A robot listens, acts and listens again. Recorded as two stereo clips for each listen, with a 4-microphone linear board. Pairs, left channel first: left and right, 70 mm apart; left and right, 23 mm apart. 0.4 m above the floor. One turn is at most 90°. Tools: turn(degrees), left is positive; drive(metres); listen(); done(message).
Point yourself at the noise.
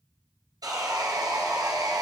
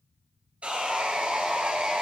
turn(degrees=-70)
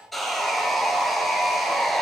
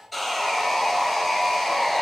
done("Facing the sawing, 1 to 2 m away.")